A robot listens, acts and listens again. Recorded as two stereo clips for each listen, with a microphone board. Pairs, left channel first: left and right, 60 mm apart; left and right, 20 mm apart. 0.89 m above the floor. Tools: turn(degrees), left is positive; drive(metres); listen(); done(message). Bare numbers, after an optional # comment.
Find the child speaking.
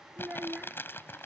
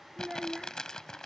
# The child speaking: about 25° right or 155° right.
turn(-25)
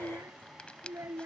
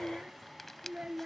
# So it is at 130° right.
turn(-130)
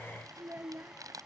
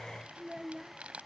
# The child speaking is now 30° right.
turn(-30)
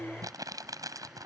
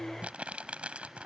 # The child speaking is now 15° right.
turn(-15)
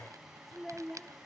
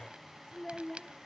done("Found it: a child speaking, straight ahead.")